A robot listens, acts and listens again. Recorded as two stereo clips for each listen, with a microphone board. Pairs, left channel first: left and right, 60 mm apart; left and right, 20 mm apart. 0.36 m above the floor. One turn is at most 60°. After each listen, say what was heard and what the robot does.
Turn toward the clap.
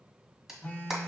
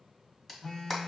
Turn 30° right.
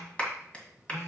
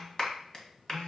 So it is at 20° left. Turn 20° left.
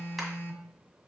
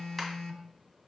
Keep listening.
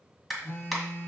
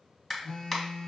Facing the clap.